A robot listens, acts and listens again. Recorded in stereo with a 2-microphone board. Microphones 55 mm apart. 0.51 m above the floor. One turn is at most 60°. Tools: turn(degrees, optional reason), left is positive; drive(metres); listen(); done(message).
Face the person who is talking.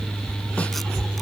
listen()
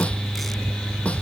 listen()
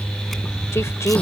turn(degrees=60, reason="The woman speaking: about 60° left or 120° left.")
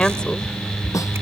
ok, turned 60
turn(degrees=20, reason="So it is at 20° left.")
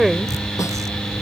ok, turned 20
done("Found it: a woman speaking, straight ahead.")